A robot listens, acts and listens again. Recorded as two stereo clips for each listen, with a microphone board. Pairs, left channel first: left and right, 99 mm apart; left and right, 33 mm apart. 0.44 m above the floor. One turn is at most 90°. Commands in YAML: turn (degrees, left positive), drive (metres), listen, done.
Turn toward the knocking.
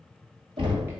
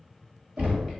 turn: -60
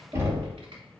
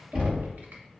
turn: -35
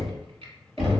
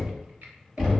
done: "Facing the knocking."